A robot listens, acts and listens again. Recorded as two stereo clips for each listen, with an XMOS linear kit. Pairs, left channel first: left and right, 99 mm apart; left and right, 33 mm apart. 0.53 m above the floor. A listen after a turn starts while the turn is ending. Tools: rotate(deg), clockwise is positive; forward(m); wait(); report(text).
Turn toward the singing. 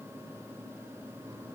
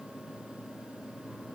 wait()
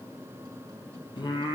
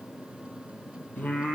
rotate(-45)
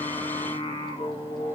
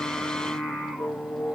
rotate(-85)
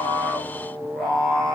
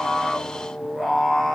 rotate(-10)
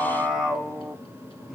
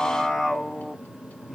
report("Found it: singing, straight ahead.")